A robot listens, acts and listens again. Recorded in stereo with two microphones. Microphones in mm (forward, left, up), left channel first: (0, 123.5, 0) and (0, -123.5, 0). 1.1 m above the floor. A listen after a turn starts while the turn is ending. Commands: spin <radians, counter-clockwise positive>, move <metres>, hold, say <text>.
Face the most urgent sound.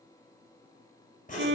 hold
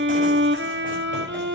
hold
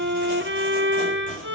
say I can't make out anything urgent, only writing and a violin.